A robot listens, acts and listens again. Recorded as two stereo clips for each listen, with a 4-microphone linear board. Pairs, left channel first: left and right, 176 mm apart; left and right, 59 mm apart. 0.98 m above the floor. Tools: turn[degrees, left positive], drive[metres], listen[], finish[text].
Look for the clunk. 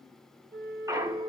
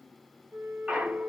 Thought: The clunk: about 20° right or 160° right.
Action: turn[-20]
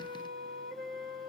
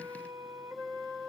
Action: listen[]
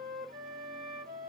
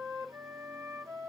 Action: finish[I heard a clunk, but can't make it out now. It was about straight ahead or 140° right.]